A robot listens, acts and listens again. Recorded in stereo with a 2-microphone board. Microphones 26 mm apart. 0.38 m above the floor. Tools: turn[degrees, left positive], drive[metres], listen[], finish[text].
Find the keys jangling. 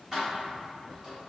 Thought: The keys jangling: about 20° right or 160° right.
Action: turn[-20]
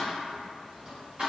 Thought: The keys jangling: about 40° right or 140° right.
Action: turn[-40]
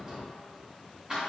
Thought: The keys jangling: about 20° right or 160° right.
Action: turn[-20]
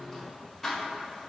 Thought: So it is at 10° left.
Action: turn[10]
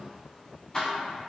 Thought: The keys jangling is now 20° left.
Action: turn[20]
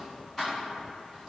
Action: finish[Facing the keys jangling, 1 to 2 m away.]